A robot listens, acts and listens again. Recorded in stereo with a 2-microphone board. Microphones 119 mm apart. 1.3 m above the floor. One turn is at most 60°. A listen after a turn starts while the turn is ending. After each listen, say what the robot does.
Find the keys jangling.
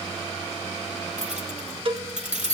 Turn 60° right.
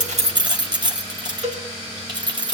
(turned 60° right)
Turn 40° right.
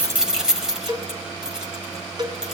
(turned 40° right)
Found it: keys jangling, straight ahead, over 4 m away.